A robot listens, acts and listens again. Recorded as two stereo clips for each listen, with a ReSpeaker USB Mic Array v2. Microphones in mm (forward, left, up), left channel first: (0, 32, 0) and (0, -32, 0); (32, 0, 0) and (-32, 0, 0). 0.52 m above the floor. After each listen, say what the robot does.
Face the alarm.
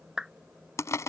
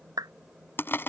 Keep listening.
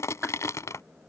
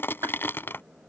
Keep listening.
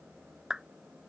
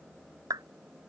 I can't make out an alarm, only crushing and a clap.